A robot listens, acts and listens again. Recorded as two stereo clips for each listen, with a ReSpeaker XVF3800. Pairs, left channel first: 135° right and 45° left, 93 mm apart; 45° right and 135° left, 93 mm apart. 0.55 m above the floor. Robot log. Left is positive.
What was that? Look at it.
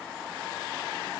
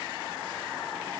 cmd idle
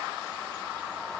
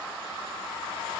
cmd idle
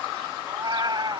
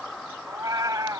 note: The cat meowing: 85° left.
cmd yaw +85
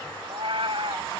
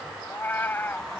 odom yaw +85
note: The cat meowing is now 25° left.
cmd yaw +25
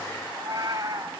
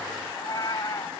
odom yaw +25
end: Facing the cat meowing.